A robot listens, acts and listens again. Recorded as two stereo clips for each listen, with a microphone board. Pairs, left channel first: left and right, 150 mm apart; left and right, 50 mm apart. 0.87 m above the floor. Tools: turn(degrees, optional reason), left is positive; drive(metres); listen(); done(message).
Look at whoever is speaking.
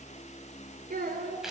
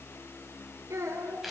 turn(degrees=-75, reason="The child speaking: about 75° right or 105° right.")
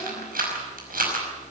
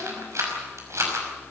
listen()
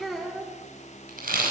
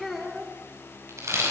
done("Found it: a child speaking, straight ahead.")